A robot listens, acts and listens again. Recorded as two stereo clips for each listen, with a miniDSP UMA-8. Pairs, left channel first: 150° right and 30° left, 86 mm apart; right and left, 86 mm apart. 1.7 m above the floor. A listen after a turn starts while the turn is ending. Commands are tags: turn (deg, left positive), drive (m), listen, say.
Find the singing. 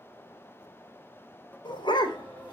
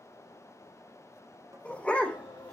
<turn deg="-75"/>
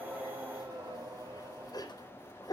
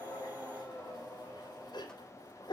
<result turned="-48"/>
<turn deg="-25"/>
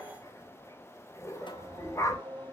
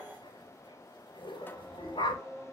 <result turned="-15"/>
<turn deg="-10"/>
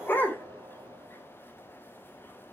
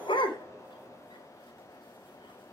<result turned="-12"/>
<listen/>
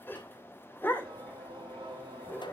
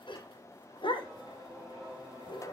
<say>Found it: singing, straight ahead.</say>